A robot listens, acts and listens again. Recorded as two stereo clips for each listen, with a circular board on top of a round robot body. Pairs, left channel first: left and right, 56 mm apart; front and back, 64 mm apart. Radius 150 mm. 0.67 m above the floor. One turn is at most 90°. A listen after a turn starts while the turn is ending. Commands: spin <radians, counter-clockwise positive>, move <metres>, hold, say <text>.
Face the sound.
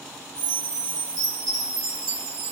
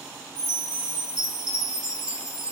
spin -1.57
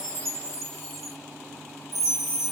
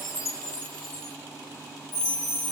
say Facing the chime, 1 to 2 m away.